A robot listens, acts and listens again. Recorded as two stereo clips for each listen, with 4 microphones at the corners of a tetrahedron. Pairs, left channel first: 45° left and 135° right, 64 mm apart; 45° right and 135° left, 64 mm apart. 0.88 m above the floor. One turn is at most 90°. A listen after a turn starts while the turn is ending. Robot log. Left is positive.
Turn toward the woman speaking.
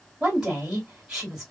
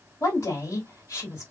note: The woman speaking: 55° right.
cmd yaw -55
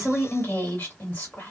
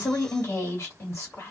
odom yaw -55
end: Found it: a woman speaking, straight ahead.